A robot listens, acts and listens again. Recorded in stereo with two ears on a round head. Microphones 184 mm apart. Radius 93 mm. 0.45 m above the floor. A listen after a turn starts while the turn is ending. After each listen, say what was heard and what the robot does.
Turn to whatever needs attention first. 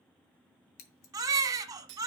The baby crying: about 20° right or 160° right. Turn 20° right.
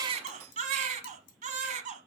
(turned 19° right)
So it is at 145° right. Turn 145° right.
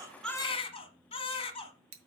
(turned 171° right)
The baby crying is now 25° left. Turn 25° left.
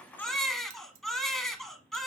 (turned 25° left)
Facing the baby crying, 1 to 2 m away.